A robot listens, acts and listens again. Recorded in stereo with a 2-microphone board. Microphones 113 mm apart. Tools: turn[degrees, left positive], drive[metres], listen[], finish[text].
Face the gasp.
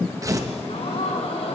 Thought: The gasp: about 75° left or 105° left.
Action: turn[75]
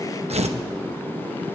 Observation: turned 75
Action: listen[]
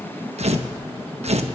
Action: finish[I heard a gasp, but can't make it out now. It was about straight ahead or 30° left.]